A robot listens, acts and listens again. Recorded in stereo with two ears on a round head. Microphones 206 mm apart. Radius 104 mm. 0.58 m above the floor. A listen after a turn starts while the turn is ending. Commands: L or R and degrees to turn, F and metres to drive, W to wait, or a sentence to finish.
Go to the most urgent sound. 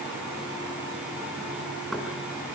W
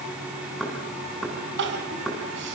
R50
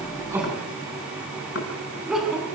F1.0
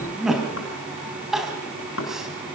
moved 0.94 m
F1.0
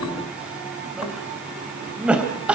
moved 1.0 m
F1.0
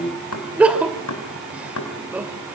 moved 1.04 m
F1.0
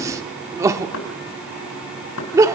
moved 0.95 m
R15
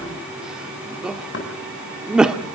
F1.0
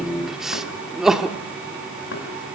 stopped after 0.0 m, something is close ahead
Arrived at the crying, straight ahead.